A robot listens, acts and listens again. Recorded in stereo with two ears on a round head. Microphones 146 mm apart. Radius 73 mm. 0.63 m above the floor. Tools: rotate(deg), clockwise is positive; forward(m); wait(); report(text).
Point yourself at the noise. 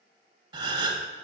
rotate(30)
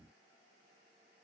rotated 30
wait()
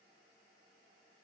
report("I heard a gasp, but can't make it out now. It was about straight ahead or 120° right.")